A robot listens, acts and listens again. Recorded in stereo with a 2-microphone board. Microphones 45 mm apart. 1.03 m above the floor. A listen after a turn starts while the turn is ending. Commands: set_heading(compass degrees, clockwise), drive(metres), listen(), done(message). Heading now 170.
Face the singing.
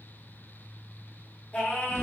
set_heading(140)
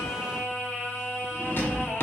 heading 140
done("Facing the singing, 1 to 2 m away.")